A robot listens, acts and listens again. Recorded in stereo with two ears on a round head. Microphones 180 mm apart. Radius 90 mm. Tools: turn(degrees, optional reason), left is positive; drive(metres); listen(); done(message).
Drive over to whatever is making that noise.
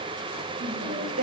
turn(degrees=-75, reason="The singing: about 75° right or 105° right.")
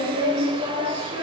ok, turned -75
turn(degrees=-30, reason="So it is at 30° right.")
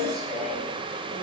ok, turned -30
drive(metres=1.0)
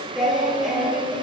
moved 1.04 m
drive(metres=1.0)
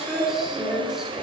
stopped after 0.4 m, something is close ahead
done("I am next to the singing.")